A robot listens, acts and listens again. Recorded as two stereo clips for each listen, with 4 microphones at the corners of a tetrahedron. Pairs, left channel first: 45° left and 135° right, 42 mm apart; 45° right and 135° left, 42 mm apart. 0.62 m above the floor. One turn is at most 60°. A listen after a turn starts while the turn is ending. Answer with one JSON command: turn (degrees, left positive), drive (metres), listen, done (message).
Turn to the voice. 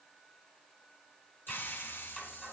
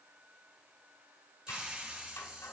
{"listen": true}
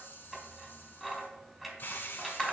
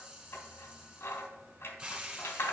{"listen": true}
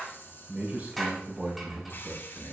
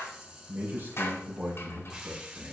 {"turn": 60}
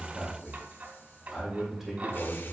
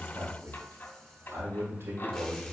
{"turn": 60}
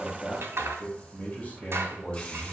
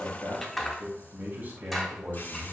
{"turn": 60}
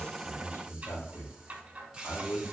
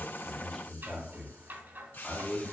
{"turn": 40}
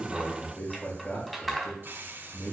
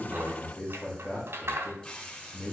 {"done": "Found it: a man speaking, straight ahead, 2 to 4 m away."}